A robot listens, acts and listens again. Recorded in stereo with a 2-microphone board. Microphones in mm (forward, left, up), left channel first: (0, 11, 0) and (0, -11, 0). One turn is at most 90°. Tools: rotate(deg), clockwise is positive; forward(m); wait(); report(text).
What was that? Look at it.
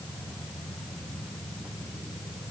wait()
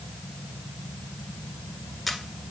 rotate(-30)
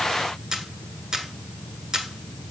rotate(30)
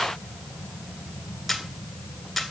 report("Facing the camera shutter, 1 to 2 m away.")